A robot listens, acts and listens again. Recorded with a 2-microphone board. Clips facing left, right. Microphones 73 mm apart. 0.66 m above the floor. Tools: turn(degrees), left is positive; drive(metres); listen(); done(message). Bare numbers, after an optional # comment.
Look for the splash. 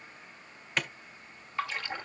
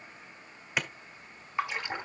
# The splash: about 20° right or 160° right.
turn(-20)
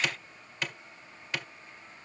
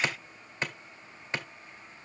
listen()
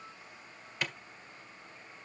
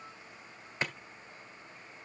done("I heard a splash, but can't make it out now. It was about straight ahead or 140° right.")